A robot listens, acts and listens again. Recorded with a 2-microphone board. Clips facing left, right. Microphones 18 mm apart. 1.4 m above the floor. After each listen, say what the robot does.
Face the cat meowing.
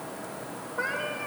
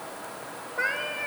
Turn 20° right.
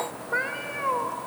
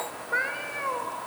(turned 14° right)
Turn 30° left.
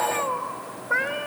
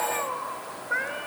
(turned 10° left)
Turn 25° left.
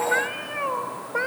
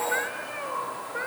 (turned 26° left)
Turn 35° left.
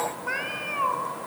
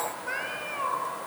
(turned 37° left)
Turn 15° left.
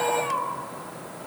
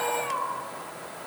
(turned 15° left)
Found it: a cat meowing, straight ahead, 2 to 4 m away.